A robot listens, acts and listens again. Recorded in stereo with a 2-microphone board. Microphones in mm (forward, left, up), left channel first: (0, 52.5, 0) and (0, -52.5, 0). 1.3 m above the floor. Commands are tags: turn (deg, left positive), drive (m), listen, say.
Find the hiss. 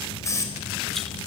<turn deg="30"/>
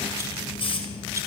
<turn deg="120"/>
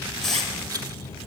<say>Facing the hiss, over 4 m away.</say>